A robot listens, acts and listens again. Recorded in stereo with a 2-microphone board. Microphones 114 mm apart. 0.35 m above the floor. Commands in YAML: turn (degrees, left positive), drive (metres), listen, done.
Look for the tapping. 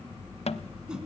turn: 65
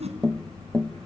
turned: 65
done: "Found it: tapping, straight ahead."